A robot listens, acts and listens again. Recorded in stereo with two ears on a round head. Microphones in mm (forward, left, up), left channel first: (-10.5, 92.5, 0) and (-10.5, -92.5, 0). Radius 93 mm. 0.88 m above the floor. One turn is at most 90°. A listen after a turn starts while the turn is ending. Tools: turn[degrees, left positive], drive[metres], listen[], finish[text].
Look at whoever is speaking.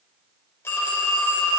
Action: listen[]
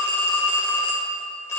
Action: listen[]
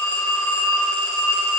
Action: finish[I can't make out anyone speaking, only a phone ringing.]